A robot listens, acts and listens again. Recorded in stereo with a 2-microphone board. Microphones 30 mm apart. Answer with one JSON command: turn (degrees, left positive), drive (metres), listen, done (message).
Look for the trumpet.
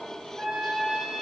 {"turn": -25}
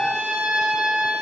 {"turn": -125}
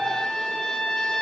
{"turn": 20}
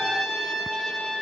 {"done": "Facing the trumpet, 2 to 4 m away."}